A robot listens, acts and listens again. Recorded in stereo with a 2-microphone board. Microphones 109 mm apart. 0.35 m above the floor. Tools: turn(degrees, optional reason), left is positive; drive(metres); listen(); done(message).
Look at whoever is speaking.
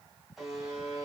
listen()
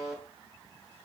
listen()
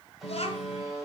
turn(degrees=65, reason="The child speaking: about 65° left or 115° left.")
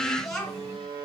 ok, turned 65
done("Found it: a child speaking, straight ahead.")